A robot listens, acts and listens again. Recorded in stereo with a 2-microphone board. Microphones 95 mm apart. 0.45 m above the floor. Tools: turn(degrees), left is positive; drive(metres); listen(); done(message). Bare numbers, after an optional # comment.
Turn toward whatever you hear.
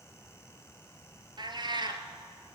# The cat meowing: about 55° right or 125° right.
turn(-55)
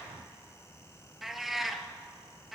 done("Facing the cat meowing, 1 to 2 m away.")